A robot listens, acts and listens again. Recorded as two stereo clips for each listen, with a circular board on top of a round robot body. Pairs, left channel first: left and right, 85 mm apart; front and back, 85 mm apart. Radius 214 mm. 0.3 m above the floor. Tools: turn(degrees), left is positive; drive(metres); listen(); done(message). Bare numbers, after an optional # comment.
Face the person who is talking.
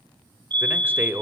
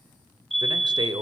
# The man speaking: 155° right.
turn(-155)
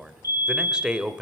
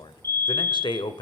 # The man speaking is now 10° right.
turn(-10)
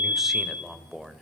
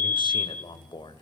done("Found it: a man speaking, straight ahead, 1 to 2 m away.")